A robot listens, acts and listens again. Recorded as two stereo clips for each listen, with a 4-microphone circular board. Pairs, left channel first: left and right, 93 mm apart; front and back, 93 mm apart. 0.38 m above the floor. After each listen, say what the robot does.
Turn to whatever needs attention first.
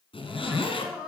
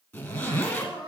Turn 170° right.
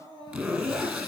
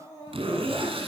Turn 50° right.
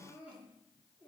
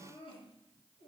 Turn 15° right.
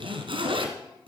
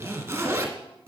Keep listening.
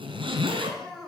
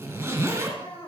Found it: crying, straight ahead.